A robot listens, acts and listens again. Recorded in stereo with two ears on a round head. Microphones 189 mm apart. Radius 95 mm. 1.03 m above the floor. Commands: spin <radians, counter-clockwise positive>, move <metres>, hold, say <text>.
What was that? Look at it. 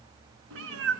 spin -1.05
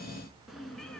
say Found it: a cat meowing, straight ahead.